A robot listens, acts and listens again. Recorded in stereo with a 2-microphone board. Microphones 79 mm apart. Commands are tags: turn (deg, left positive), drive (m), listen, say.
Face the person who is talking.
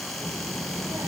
<turn deg="-45"/>
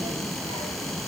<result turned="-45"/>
<turn deg="-90"/>
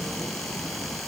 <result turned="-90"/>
<turn deg="10"/>
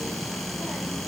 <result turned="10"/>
<say>Facing the child speaking, over 4 m away.</say>